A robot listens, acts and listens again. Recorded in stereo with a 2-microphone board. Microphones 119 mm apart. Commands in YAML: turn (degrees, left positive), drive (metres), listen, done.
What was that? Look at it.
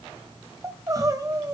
turn: -30
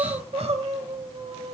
turn: -120
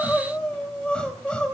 turn: 10
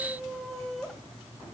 done: "Found it: crying, straight ahead, 2 to 4 m away."